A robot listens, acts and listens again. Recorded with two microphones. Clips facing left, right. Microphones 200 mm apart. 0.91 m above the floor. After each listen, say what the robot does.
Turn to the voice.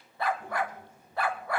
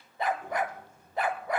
Turn 65° left.
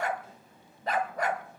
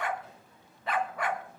Turn 40° left.
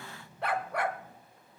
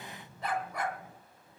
Turn 20° right.
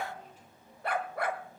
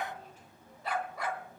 Turn 15° right.
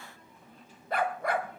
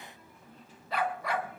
Facing the child speaking, 1 to 2 m away.